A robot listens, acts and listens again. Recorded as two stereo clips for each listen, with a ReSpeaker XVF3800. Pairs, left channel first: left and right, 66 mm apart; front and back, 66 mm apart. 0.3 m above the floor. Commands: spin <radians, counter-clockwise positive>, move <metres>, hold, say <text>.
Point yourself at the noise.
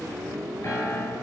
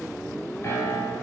spin 0.79
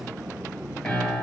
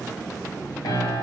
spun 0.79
spin 0.17
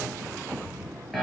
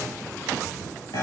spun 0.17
say Found it: a piano, straight ahead, under 1 m away.